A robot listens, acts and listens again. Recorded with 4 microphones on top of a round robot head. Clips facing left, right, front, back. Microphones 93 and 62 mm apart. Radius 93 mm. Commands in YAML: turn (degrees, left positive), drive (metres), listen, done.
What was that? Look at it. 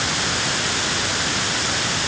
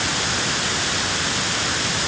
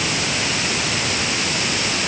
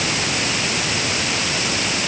listen: true
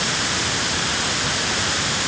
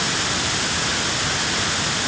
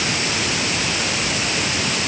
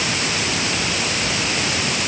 listen: true
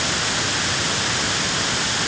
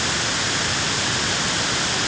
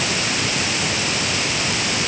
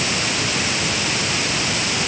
done: "I can't make out anything."